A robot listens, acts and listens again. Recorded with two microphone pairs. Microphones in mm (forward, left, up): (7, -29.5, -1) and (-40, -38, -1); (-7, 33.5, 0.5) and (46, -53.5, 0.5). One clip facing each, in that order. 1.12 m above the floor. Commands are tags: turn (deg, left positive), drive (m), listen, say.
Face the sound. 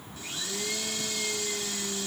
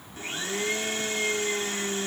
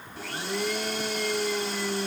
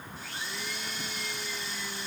<turn deg="140"/>
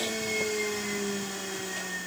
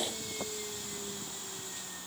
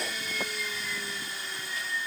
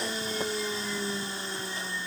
<say>Found it: a blender, straight ahead.</say>